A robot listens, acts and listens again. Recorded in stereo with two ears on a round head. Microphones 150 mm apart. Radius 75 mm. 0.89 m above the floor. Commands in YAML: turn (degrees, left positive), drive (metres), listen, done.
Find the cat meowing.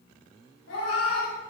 turn: 90
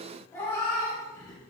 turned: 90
turn: 20
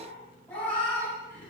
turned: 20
turn: 15
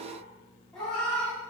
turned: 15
done: "Found it: a cat meowing, straight ahead, 2 to 4 m away."